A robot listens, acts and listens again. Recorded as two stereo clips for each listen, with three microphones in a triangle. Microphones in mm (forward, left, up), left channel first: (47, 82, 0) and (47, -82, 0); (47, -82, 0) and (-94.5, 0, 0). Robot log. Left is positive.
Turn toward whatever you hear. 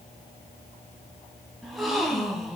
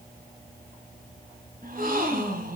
note: The gasp: straight behind.
cmd yaw +180
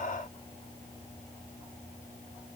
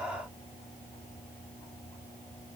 end: Facing where the gasp came from. I can't hear it now.